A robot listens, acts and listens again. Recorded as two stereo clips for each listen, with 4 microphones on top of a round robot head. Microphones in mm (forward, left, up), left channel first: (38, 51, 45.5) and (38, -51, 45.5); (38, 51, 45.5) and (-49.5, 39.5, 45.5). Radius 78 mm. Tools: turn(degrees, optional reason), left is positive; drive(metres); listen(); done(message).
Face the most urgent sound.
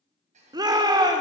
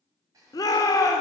turn(degrees=-45, reason="The shout: 45° right.")
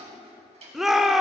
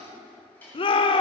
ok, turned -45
done("Facing the shout.")